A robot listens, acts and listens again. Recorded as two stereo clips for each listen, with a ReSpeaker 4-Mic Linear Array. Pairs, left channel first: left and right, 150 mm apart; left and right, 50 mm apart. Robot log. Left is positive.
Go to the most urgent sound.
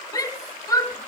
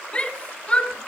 note: The shout: about 20° left or 160° left.
cmd yaw +20
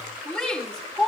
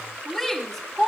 cmd fwd 1.0
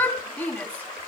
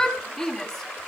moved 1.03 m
note: The shout is now 10° left.
cmd yaw +10
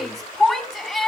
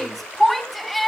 cmd fwd 1.0
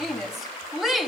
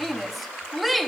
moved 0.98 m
cmd fwd 1.0
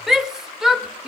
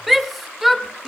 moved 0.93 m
cmd fwd 1.0
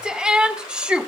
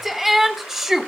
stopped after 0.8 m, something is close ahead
end: I am next to the shout.